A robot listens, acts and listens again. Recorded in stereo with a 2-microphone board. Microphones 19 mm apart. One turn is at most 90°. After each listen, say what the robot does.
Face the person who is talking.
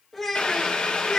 Turn 15° left.
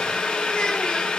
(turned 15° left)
Keep listening.
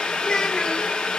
Turn 90° left.
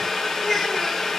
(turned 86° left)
Turn 50° left.
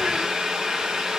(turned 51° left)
Keep listening.
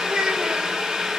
Turn 65° right.
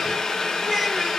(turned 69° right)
Facing the child speaking.